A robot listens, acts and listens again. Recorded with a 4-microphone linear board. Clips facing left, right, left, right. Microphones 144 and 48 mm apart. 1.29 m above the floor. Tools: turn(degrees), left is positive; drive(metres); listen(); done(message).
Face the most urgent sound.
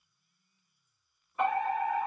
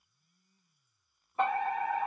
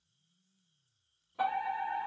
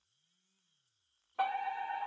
turn(degrees=-35)
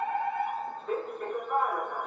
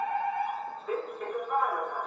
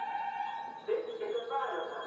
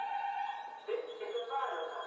done("Facing the fire alarm, 1 to 2 m away.")